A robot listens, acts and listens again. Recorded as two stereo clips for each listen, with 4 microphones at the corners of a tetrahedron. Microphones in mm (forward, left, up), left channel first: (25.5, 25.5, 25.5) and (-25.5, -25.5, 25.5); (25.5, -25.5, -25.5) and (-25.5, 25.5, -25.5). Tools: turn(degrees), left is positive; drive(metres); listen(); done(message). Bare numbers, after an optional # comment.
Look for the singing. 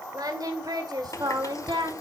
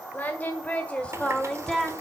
# The singing: 130° right.
turn(-130)
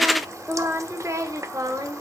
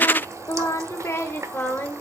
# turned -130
# The singing is now 105° right.
turn(-105)
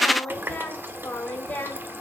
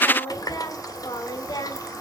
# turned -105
# The singing is now 20° right.
turn(-20)
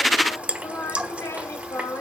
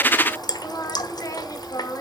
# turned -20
# The singing is now 10° right.
turn(-10)
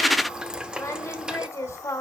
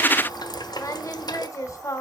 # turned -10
done("Found it: singing, straight ahead, 2 to 4 m away.")